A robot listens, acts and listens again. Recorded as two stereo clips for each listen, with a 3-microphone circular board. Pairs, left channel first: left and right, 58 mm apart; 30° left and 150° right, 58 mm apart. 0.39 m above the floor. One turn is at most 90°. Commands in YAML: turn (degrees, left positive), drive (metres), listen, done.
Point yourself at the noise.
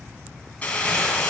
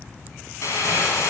turn: 30
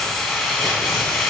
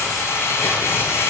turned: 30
done: "Found it: crumpling, straight ahead, 2 to 4 m away."